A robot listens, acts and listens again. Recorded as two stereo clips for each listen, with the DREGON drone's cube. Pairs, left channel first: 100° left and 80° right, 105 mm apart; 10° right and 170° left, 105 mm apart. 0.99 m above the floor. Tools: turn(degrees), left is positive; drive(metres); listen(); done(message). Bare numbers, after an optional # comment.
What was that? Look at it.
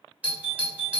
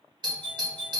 # The doorbell: 155° right.
turn(-155)
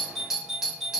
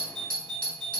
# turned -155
done("Found it: a doorbell, straight ahead.")